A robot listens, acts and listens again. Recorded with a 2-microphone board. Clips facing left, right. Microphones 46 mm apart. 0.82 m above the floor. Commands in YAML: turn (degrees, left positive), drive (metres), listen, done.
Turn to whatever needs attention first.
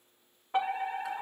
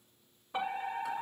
turn: 50
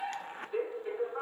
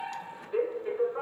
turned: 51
done: "Found it: a fire alarm, straight ahead."